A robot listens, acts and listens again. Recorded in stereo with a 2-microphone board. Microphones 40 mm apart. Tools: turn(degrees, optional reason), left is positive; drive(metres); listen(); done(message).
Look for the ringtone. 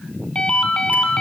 turn(degrees=25, reason="The ringtone: about 25° left or 155° left.")
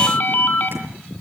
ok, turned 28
turn(degrees=130, reason="So it is at 130° left.")
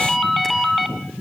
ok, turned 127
done("Facing the ringtone, 2 to 4 m away.")